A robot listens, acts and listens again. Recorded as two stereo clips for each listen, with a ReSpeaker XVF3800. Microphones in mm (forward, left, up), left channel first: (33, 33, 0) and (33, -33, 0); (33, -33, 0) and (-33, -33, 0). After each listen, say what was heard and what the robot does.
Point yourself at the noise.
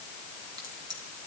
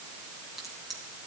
The crack: 95° right. Turn 95° right.
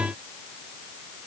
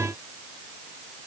Facing where the crack came from. I can't hear it now.